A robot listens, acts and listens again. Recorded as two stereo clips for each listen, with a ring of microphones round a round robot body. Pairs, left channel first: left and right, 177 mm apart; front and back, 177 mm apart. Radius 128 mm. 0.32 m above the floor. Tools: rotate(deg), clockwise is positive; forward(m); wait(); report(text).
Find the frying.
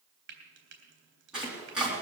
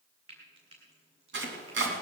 rotate(110)
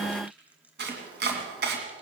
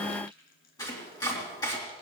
rotate(10)
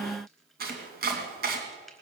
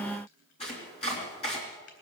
wait()
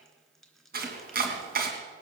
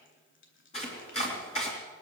wait()
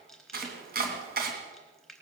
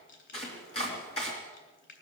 report("Facing the frying, 2 to 4 m away.")